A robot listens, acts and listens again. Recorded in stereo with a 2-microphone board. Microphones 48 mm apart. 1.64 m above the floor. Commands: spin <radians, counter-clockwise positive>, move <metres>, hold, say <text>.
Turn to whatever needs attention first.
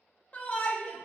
spin 0.44
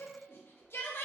spin 2.27
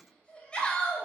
spin 0.35
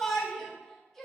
say Facing the shout, under 1 m away.